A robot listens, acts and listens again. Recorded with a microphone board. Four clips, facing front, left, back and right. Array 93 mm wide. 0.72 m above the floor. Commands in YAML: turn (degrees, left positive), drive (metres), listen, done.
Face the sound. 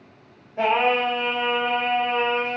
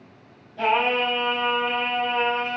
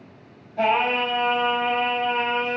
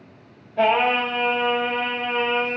turn: -50
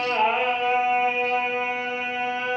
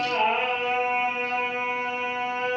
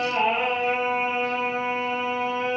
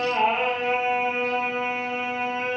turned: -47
turn: 15
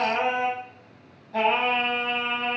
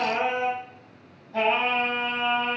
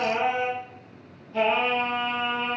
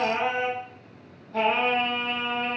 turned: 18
done: "Facing the singing."